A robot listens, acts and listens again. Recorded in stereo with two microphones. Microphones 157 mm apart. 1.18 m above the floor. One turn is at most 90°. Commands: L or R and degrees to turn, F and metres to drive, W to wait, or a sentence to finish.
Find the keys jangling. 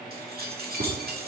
R90
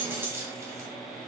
R15
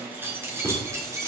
R20
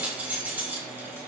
R15
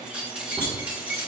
R10
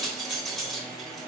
Facing the keys jangling, 2 to 4 m away.